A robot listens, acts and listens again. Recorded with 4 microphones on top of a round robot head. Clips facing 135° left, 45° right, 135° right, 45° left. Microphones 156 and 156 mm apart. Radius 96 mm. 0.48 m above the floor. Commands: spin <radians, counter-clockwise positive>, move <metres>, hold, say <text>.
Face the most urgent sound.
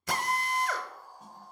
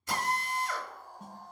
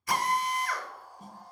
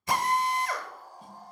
spin -0.26
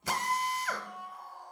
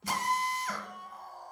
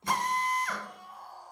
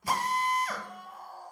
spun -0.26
say Facing the scream, 2 to 4 m away.